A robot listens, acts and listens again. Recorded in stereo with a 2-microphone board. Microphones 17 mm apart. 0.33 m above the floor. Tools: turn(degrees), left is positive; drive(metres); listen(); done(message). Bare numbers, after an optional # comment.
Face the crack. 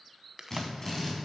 # The crack: about 20° right or 160° right.
turn(-20)
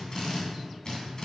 listen()
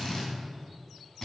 done("I heard a crack, but can't make it out now. It was about straight ahead or 140° right.")